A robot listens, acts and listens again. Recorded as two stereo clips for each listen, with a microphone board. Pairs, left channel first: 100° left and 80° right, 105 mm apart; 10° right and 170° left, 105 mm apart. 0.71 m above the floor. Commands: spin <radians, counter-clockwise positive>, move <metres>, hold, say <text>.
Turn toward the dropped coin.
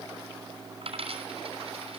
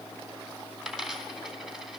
spin -1.83
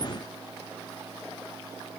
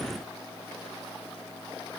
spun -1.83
say Facing where the dropped coin came from. I can't hear it now.